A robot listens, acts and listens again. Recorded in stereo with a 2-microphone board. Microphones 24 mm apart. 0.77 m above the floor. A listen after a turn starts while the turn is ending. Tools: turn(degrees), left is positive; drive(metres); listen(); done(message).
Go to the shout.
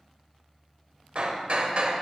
listen()
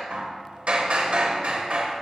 listen()
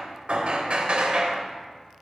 done("I can't make out a shout to turn to.")